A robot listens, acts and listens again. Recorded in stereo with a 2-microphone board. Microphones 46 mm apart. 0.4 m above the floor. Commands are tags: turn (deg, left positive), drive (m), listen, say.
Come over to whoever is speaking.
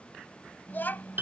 <turn deg="45"/>
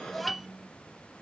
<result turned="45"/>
<drive m="1.0"/>
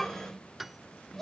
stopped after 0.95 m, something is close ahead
<say>Arrived at the child speaking, straight ahead.</say>